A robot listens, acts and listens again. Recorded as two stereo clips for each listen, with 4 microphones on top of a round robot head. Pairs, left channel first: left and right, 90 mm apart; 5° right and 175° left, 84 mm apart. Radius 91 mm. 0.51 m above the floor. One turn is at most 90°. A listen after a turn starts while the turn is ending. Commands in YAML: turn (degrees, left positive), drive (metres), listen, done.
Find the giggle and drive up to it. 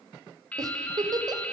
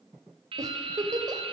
turn: -90
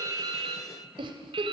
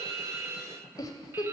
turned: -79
turn: -55
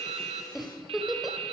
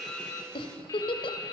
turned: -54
drive: 1.0
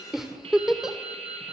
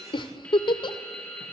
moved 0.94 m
drive: 1.0
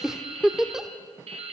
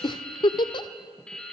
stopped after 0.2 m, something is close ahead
done: "Arrived at the giggle, straight ahead."